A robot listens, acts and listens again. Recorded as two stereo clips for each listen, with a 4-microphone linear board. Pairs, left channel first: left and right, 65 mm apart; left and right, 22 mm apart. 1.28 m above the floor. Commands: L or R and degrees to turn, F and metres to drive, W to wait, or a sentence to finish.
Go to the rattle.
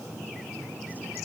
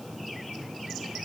W
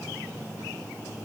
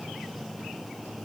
W
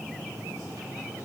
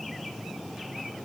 I can't make out a rattle to turn to.